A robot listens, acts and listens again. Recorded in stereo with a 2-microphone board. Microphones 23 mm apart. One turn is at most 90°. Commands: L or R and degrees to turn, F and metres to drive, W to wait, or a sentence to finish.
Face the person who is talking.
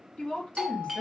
L55
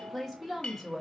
Facing the woman speaking.